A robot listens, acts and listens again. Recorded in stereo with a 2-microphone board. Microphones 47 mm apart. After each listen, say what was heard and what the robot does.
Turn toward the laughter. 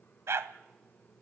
Keep listening.
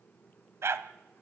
Keep listening.
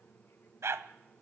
I can't make out laughter to turn to.